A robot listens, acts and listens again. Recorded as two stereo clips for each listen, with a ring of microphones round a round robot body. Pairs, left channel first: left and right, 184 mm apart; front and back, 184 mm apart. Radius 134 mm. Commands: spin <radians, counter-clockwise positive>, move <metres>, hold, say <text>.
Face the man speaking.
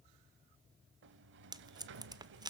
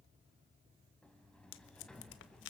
hold
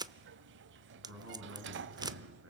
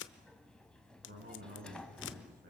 spin -2.18
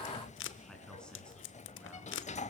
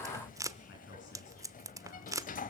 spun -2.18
say Found it: a man speaking, straight ahead.